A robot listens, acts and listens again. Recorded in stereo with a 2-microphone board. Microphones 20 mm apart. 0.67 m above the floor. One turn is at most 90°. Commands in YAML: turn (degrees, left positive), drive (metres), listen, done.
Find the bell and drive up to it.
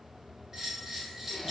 turn: -25
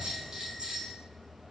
turn: -90
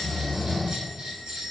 turn: -70
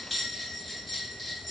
drive: 1.0
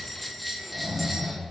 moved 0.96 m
drive: 1.0
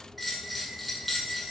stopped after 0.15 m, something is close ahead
done: "Arrived at the bell, straight ahead."